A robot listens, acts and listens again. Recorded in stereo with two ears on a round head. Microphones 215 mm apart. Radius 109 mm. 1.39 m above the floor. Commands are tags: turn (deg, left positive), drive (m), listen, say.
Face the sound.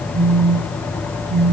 <turn deg="-55"/>
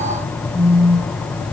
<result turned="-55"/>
<turn deg="-10"/>
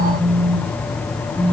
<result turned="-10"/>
<say>Found it: a phone buzzing, straight ahead.</say>